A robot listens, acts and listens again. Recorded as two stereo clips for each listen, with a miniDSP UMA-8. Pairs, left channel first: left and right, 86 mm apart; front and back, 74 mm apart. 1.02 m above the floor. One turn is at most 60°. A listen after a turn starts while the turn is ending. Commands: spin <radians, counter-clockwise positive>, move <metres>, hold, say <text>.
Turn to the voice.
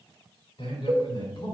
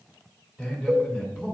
spin 1.05
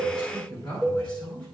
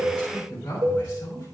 spin 1.05
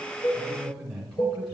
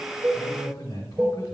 say Facing the man speaking.